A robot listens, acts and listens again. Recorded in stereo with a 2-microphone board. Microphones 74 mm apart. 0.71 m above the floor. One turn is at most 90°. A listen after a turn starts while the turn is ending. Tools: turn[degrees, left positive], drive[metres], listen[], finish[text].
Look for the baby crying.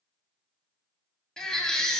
Action: turn[30]
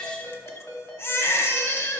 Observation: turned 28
Thought: So it is at 140° left.
Action: turn[90]
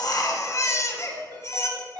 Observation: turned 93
Thought: The baby crying is now 45° left.
Action: turn[45]
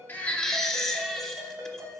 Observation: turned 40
Action: finish[Found it: a baby crying, straight ahead, under 1 m away.]